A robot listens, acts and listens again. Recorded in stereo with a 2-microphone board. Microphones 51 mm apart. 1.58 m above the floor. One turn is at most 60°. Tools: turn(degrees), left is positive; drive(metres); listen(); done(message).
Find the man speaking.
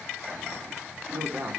turn(degrees=-55)
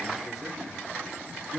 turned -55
done("Facing the man speaking.")